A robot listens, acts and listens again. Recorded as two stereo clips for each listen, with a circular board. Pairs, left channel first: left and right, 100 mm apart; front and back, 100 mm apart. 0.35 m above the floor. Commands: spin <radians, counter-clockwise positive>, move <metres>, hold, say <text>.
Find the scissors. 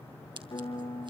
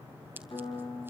spin -2.01
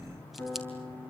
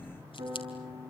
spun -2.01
hold
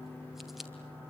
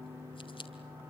say Found it: scissors, straight ahead, 2 to 4 m away.